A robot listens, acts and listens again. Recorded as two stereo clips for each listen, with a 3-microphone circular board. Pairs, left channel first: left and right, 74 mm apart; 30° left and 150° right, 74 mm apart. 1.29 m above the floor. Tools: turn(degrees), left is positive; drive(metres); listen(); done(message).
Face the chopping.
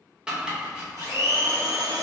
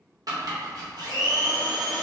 turn(degrees=-165)
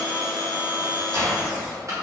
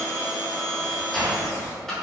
turn(degrees=-50)
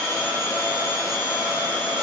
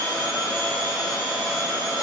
listen()
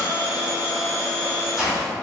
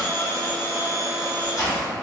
done("Found it: chopping, straight ahead.")